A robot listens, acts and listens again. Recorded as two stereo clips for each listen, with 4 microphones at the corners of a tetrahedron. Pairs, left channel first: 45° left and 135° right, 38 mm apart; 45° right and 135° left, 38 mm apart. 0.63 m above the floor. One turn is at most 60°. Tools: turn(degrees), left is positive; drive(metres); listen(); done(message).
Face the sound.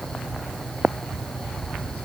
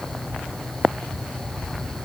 listen()
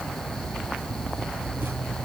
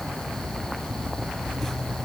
listen()
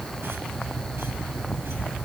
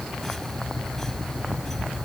done("I can't make out anything to turn to.")